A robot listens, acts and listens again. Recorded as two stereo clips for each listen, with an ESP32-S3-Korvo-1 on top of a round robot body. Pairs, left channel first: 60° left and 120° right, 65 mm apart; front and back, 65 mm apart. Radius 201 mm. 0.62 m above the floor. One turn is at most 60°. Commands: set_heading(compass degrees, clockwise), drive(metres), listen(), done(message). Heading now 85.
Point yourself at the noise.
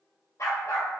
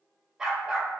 set_heading(25)
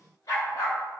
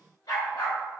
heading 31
set_heading(11)
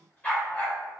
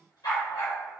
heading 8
set_heading(18)
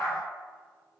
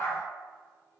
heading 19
done("Facing the dog barking.")